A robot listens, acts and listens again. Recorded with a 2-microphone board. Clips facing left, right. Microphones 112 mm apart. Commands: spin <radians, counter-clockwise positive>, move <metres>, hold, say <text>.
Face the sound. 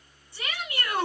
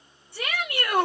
spin -1.05
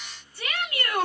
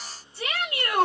spin -0.61
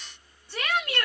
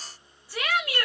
say Found it: a shout, straight ahead.